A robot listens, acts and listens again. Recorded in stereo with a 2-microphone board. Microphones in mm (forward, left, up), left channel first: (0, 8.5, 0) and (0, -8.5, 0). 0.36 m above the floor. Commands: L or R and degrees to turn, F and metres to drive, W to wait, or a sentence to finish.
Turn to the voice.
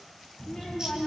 L75
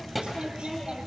Found it: a child speaking, straight ahead, over 4 m away.